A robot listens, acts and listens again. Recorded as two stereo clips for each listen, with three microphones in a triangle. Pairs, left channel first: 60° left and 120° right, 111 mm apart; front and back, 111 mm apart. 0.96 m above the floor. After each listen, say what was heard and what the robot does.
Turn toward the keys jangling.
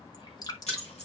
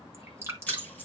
The keys jangling: 75° left. Turn 75° left.
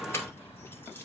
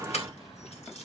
Keep listening.
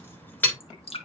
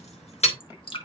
The keys jangling is now 15° right. Turn 15° right.
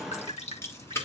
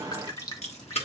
The keys jangling is now 10° right. Turn 10° right.
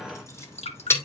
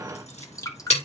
The keys jangling is now 10° right. Turn 10° right.
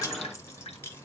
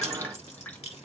Keep listening.
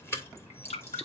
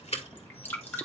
The keys jangling is now 10° right. Turn 10° right.
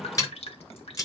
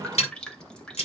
Facing the keys jangling, 2 to 4 m away.